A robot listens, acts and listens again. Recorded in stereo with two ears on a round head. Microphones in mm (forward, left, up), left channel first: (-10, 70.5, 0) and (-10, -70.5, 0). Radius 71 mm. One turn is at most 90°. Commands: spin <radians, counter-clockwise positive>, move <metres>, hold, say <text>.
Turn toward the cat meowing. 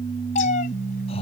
spin 0.87
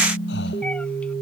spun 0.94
hold
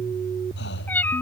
spin 0.17
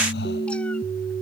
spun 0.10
hold
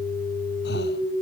hold
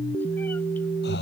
say Facing where the cat meowing came from. I can't hear it now.